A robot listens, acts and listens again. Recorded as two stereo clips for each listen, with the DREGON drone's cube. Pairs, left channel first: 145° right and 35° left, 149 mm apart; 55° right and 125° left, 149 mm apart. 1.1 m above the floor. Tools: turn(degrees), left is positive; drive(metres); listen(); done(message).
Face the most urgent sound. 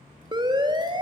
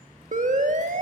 turn(degrees=95)
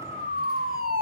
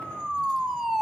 turn(degrees=35)
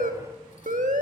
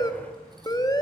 done("Found it: a siren, straight ahead.")